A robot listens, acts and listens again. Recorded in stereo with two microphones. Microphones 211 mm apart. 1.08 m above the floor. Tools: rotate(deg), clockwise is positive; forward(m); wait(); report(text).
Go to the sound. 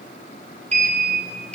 rotate(30)
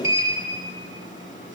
rotate(120)
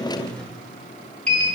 forward(1.0)
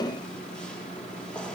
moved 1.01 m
forward(1.0)
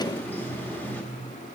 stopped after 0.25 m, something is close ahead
rotate(-10)
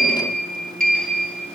report("Arrived at the sliding door, straight ahead.")